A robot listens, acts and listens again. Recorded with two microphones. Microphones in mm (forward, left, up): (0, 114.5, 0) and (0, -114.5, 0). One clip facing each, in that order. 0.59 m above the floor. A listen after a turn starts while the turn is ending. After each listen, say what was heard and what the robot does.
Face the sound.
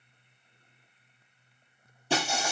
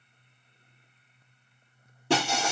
The breaking glass: about 70° right or 110° right. Turn 70° right.
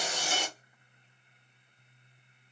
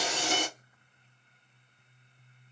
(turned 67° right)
Keep listening.
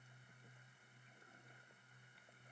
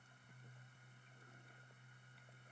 I heard breaking glass, but can't make it out now. It was about 5° right or 40° right.